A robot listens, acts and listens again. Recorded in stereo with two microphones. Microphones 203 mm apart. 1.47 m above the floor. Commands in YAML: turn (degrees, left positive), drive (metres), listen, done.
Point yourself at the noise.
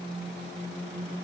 listen: true
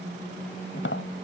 turn: 90
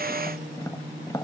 turn: 20
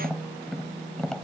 done: "Facing the tapping."